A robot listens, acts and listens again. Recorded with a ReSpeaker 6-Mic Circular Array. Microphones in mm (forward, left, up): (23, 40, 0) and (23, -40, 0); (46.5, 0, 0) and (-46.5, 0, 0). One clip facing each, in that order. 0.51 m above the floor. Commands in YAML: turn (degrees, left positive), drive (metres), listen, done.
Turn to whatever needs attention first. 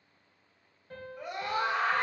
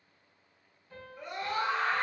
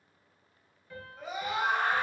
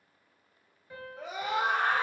turn: 170
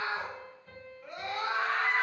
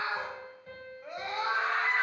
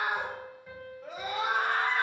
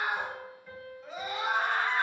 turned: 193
turn: -20
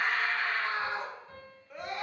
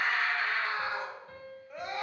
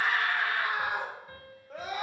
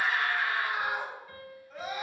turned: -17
done: "Facing the scream, 1 to 2 m away."